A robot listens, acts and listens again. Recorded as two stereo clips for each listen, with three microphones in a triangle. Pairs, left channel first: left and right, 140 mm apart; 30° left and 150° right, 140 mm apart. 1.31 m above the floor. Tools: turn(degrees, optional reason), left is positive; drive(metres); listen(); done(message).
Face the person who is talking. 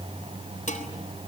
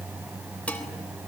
listen()
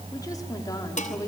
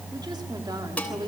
turn(degrees=155, reason="The woman speaking: 155° left.")
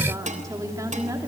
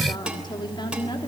turn(degrees=-25, reason="The woman speaking is now 25° right.")
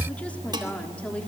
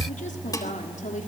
turn(degrees=10, reason="The woman speaking is now 10° left.")
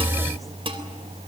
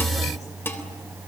listen()
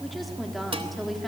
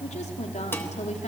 done("Found it: a woman speaking, straight ahead.")